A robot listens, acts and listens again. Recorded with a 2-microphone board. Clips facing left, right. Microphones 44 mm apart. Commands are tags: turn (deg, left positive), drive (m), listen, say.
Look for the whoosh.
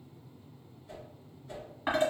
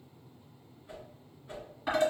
<turn deg="-30"/>
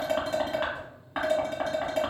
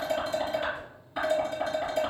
<listen/>
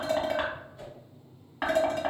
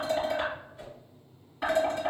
<say>Facing the whoosh, 1 to 2 m away.</say>